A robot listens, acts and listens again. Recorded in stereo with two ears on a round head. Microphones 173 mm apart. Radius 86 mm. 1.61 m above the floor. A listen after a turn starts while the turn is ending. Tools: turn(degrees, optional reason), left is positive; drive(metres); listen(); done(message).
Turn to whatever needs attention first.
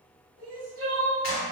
turn(degrees=-90)
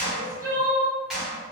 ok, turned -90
turn(degrees=-15, reason="So it is at 15° right.")
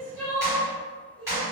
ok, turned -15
done("Facing the crying.")